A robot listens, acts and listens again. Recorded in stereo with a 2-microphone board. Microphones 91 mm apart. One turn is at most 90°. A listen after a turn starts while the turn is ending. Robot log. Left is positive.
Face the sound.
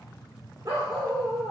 note: The dog barking: about 30° right or 150° right.
cmd yaw -30
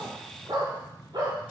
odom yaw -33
note: So it is at 125° right.
cmd yaw -90
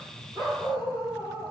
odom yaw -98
note: The dog barking is now 35° right.
cmd yaw -35
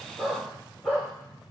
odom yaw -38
end: Found it: a dog barking, straight ahead.